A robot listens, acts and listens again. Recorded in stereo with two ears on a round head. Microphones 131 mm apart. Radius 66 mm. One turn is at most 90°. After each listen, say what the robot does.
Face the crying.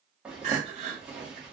Turn 55° right.
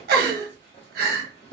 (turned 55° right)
Turn 70° right.
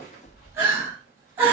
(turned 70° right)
Turn 15° right.
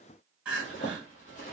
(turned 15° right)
Turn 10° right.
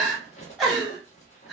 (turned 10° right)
Found it: crying, straight ahead.